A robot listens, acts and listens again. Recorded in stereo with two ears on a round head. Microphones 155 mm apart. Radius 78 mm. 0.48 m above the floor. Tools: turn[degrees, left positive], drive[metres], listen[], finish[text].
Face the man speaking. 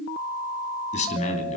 Thought: The man speaking: about 40° left or 140° left.
Action: turn[40]
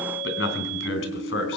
Thought: So it is at 105° left.
Action: turn[105]
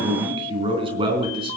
Thought: The man speaking is now 30° right.
Action: turn[-30]
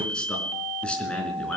Action: finish[Facing the man speaking, over 4 m away.]